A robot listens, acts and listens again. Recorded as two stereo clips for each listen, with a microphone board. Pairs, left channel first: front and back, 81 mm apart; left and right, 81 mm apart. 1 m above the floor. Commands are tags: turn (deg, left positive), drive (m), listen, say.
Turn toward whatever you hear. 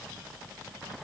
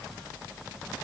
<listen/>
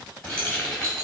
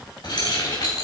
<turn deg="85"/>
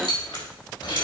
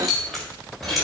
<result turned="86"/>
<say>Facing the keys jangling, 2 to 4 m away.</say>